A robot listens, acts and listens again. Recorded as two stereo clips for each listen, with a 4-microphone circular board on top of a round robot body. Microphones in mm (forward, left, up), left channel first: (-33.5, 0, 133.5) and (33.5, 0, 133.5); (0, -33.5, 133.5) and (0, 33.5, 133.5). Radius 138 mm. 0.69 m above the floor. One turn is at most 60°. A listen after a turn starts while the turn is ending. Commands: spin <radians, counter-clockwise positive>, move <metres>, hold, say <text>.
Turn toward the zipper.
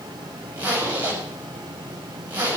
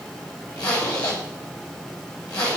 spin -1.05
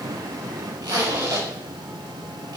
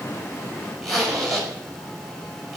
say Facing the zipper.